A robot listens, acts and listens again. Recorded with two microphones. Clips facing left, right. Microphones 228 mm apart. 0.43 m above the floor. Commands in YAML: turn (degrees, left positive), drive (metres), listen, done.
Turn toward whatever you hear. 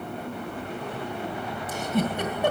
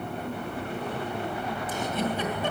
turn: 65
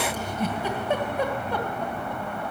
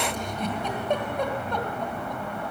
done: "Facing the giggle."